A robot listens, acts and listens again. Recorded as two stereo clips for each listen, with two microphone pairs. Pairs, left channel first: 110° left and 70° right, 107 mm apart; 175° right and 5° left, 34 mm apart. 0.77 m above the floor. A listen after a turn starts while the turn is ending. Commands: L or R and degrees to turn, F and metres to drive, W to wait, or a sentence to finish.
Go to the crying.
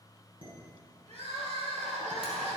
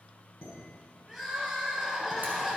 R75
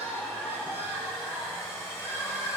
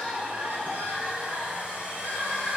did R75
F1.0
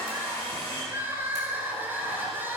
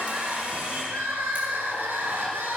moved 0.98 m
F1.0
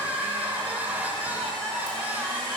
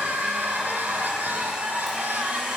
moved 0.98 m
F1.0
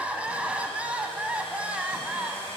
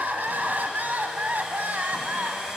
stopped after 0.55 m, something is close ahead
Arrived at the crying, straight ahead.